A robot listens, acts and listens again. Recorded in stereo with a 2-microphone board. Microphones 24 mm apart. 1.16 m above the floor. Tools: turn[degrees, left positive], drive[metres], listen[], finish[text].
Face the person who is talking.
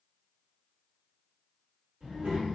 Action: turn[-90]
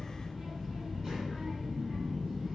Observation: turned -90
Thought: So it is at 10° right.
Action: turn[-10]
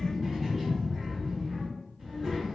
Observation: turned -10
Action: finish[Found it: a child speaking, straight ahead.]